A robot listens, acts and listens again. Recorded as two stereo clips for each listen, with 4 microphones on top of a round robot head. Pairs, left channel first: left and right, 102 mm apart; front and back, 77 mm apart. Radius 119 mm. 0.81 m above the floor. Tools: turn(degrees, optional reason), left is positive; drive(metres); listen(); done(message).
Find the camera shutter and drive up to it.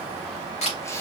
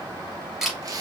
turn(degrees=95, reason="The camera shutter: 95° left.")
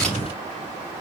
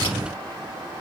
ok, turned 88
turn(degrees=10, reason="Nothing new. It was at 10° left.")
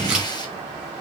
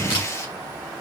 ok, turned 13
listen()
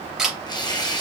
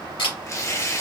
drive(metres=1.0)
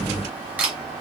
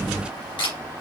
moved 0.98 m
turn(degrees=-15, reason="The camera shutter is now 15° right.")
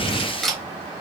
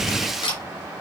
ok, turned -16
drive(metres=1.0)
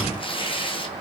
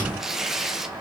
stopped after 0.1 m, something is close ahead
listen()
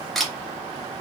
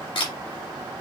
done("Something is in my way. I am facing the camera shutter but have not reached it.")